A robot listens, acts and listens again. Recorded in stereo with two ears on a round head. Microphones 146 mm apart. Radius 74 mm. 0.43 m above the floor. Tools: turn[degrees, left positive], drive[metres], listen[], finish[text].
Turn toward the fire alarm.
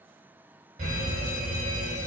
Thought: The fire alarm: about 50° right or 130° right.
Action: turn[-50]
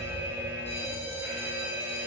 Thought: So it is at 10° right.
Action: turn[-10]
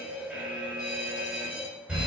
Action: finish[Found it: a fire alarm, straight ahead, over 4 m away.]